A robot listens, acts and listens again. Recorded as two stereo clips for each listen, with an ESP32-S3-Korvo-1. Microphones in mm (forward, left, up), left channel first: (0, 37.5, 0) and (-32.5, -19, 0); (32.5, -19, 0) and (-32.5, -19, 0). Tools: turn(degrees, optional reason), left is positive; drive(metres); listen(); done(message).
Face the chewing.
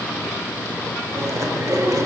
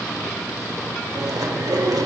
turn(degrees=-160, reason="The chewing: 160° right.")
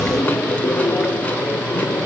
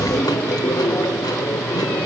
done("Facing the chewing, 1 to 2 m away.")